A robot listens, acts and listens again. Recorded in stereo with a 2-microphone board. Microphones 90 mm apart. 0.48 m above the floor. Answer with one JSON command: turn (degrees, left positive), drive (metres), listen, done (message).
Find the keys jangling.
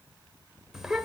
{"listen": true}
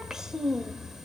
{"listen": true}
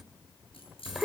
{"turn": 90}
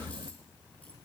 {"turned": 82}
{"turn": 10}
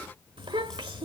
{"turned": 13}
{"listen": true}
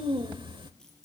{"done": "Facing the keys jangling."}